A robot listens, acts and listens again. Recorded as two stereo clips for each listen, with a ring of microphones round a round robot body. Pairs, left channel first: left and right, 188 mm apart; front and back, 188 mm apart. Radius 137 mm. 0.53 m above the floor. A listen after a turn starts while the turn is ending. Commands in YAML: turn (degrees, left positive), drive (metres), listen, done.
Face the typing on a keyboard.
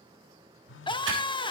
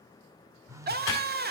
turn: -75
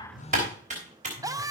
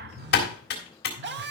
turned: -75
turn: -30
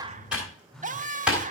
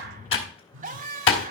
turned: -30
done: "Found it: typing on a keyboard, straight ahead, 2 to 4 m away."